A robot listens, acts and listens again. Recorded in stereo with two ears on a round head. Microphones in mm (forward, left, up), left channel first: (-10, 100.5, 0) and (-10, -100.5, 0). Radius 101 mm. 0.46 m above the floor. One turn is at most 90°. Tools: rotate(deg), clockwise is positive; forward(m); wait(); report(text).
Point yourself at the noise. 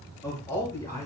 rotate(-30)
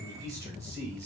rotate(15)
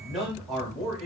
report("Found it: a man speaking, straight ahead, 1 to 2 m away.")